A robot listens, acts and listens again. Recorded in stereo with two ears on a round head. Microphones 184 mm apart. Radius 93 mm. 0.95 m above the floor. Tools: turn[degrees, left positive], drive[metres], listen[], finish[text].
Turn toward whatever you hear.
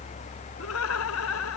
Action: turn[90]
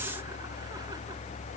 Action: listen[]
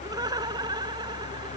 Thought: The laughter is now 20° right.
Action: turn[-20]
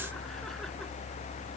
Action: listen[]
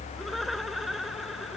Action: finish[Found it: laughter, straight ahead.]